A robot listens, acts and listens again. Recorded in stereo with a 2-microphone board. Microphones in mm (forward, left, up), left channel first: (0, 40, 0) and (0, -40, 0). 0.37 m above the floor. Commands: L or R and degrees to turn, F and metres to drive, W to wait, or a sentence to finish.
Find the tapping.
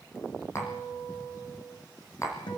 L40
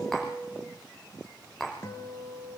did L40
Facing the tapping.